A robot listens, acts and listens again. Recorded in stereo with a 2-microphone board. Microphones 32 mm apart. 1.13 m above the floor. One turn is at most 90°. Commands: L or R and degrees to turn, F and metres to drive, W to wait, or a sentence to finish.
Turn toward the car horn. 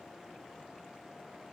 W
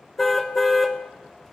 L30
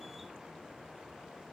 W
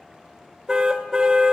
R25
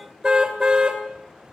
R25
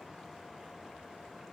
W
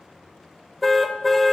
Found it: a car horn, straight ahead.